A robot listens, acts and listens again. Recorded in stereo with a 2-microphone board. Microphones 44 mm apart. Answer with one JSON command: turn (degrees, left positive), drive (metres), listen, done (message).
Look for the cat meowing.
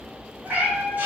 {"turn": -50}
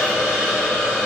{"listen": true}
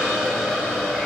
{"listen": true}
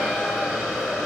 {"done": "I heard a cat meowing, but can't make it out now. It was about straight ahead or 80° right."}